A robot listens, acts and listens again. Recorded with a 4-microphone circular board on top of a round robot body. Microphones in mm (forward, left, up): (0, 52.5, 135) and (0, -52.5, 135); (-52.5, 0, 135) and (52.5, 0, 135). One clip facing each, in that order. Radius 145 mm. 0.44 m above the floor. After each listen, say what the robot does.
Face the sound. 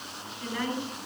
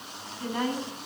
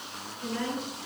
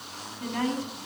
Turn 30° right.
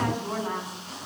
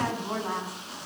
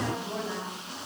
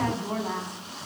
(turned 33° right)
Facing the woman speaking, over 4 m away.